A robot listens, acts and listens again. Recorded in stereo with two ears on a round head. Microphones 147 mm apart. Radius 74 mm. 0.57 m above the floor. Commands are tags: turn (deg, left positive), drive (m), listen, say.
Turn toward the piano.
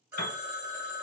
<turn deg="75"/>
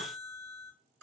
<listen/>
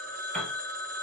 <say>Found it: a piano, straight ahead.</say>